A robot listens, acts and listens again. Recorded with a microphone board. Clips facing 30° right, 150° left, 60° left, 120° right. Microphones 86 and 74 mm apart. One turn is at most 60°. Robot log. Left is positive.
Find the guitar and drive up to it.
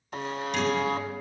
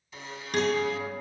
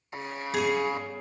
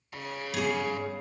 note: The guitar: 115° left.
cmd yaw +60
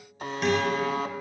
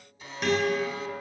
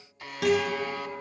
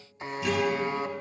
note: The guitar is now 60° left.
cmd yaw +60
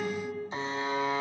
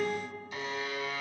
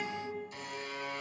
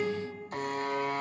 note: The guitar is now 30° left.
cmd yaw +30
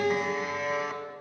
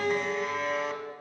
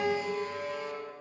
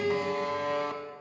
cmd fwd 1.0
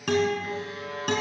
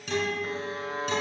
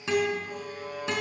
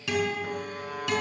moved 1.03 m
cmd fwd 1.0
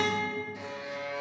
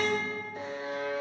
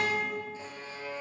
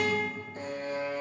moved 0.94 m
cmd fwd 1.0
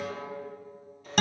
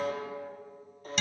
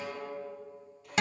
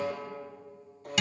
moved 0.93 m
cmd fwd 1.0
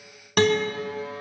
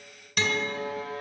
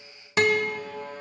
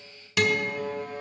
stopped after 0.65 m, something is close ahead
end: I am next to the guitar.